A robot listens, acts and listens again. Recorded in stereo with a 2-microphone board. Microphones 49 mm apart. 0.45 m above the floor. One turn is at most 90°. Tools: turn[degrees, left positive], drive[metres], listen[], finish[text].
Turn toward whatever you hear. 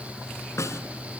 Thought: The snare drum: about 65° left or 115° left.
Action: turn[65]
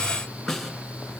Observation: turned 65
Action: finish[Facing the snare drum.]